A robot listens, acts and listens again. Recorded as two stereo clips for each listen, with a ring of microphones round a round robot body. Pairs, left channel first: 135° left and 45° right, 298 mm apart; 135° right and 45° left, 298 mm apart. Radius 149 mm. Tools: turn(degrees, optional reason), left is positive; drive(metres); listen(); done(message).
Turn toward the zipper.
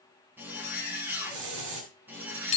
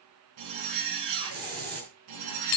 turn(degrees=40, reason="The zipper: 40° left.")
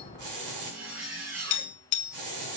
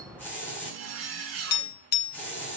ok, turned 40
done("Facing the zipper.")